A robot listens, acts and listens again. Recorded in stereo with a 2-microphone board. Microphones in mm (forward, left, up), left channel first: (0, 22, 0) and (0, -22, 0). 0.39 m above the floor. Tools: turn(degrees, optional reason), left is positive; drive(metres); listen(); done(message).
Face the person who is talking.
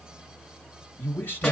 turn(degrees=55, reason="The man speaking: about 55° left or 125° left.")
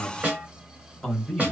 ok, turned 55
turn(degrees=15, reason="So it is at 15° left.")
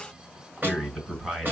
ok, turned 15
done("Found it: a man speaking, straight ahead.")